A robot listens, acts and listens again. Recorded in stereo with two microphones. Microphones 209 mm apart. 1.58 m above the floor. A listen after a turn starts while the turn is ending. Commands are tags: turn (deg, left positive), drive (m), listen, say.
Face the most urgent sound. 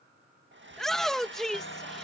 <turn deg="30"/>
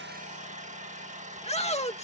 <turn deg="150"/>
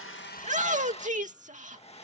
<turn deg="-35"/>
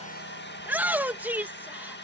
<turn deg="-10"/>
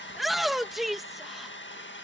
<say>Found it: a shout, straight ahead.</say>